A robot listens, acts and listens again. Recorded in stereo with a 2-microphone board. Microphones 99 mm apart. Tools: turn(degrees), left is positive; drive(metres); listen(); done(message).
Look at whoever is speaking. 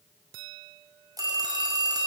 listen()
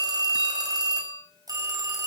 listen()
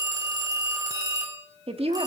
turn(degrees=-90)
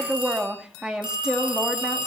turn(degrees=-10)
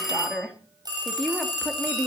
done("Facing the woman speaking, 2 to 4 m away.")